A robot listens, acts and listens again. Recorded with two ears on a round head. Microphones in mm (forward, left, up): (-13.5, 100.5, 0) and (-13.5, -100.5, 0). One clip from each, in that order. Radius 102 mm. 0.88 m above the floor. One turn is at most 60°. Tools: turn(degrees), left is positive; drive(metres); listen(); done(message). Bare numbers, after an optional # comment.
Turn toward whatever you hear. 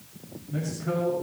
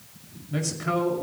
# The man speaking: about 65° right or 115° right.
turn(-60)
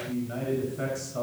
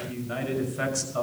# So it is at 50° right.
turn(-50)
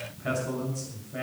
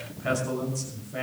# The man speaking is now 10° right.
turn(-10)
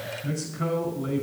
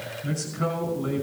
done("Found it: a man speaking, straight ahead.")